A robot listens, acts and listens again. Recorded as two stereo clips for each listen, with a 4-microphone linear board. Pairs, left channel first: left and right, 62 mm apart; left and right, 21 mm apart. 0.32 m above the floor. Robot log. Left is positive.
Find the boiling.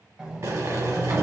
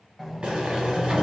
note: The boiling: about 60° right or 120° right.
cmd yaw -60
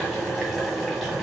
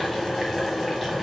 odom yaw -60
note: So it is at 15° right.
cmd yaw -15
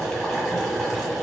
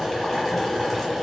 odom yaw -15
end: Found it: boiling, straight ahead, 1 to 2 m away.